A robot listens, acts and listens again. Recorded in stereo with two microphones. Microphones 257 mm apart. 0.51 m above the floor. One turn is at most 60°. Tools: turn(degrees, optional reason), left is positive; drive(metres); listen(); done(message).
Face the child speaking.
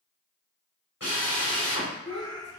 turn(degrees=45, reason="The child speaking: about 45° left or 135° left.")
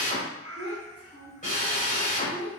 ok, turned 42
turn(degrees=10, reason="So it is at 10° left.")
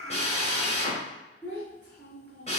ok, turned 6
done("Facing the child speaking, over 4 m away.")